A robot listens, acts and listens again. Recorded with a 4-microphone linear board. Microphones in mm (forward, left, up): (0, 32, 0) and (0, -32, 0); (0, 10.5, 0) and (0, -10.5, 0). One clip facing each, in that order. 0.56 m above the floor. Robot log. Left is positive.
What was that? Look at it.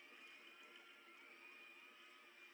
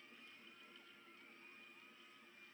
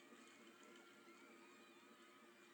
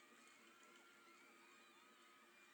cmd idle
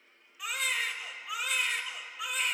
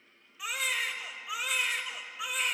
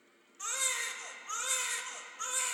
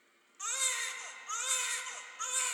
cmd yaw +30
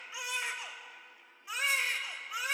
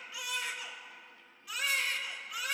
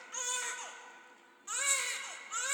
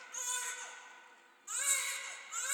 note: So it is at 150° left.
cmd yaw +150
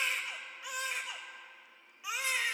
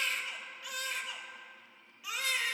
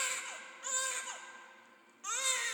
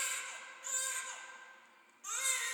note: The baby crying is now 25° left.
cmd yaw +25
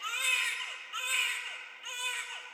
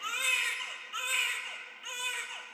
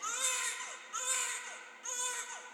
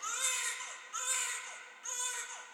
end: Facing the baby crying, 1 to 2 m away.